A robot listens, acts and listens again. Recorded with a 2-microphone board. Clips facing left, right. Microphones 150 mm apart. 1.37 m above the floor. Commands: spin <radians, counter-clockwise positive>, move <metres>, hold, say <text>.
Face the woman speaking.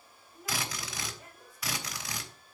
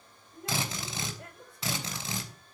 spin -1.13
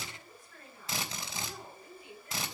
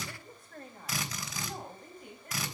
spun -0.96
spin -0.87
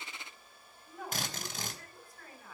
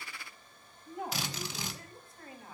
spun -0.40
spin -0.44
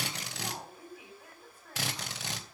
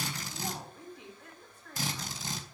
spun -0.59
spin 0.17
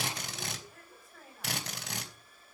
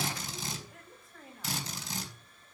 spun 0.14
say Facing the woman speaking, over 4 m away.